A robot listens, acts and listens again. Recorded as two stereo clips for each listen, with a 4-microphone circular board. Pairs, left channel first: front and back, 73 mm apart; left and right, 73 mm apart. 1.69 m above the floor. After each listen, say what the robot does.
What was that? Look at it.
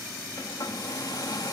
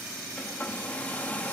Turn 20° left.
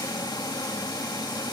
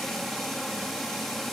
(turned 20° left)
Found it: a hair dryer, straight ahead.